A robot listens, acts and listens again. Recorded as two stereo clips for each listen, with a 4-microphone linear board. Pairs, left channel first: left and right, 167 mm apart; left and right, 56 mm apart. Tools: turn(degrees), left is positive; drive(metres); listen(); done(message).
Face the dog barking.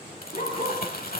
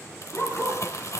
turn(degrees=50)
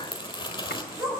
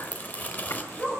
done("Facing the dog barking, over 4 m away.")